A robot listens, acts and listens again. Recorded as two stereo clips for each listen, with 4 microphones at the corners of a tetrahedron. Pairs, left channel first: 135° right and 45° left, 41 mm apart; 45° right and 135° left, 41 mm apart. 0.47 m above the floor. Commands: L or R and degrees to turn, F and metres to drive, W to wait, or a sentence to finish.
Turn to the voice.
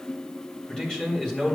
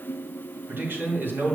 L155
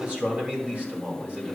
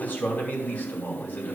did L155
Facing the man speaking, 2 to 4 m away.